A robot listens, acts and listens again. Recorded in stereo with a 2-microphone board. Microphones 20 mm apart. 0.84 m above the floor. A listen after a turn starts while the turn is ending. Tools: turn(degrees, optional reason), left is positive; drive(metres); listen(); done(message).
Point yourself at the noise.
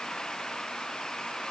listen()
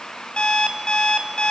turn(degrees=55, reason="The alarm clock: about 55° left or 125° left.")
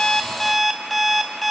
done("Found it: an alarm clock, straight ahead, 2 to 4 m away.")